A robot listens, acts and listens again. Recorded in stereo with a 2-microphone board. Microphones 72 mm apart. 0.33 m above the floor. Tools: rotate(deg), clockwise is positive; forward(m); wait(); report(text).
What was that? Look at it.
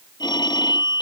rotate(-70)
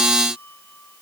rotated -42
wait()
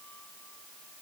wait()
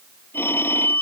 rotate(-30)
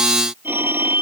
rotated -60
rotate(30)
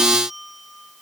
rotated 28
report("Found it: a phone ringing, straight ahead.")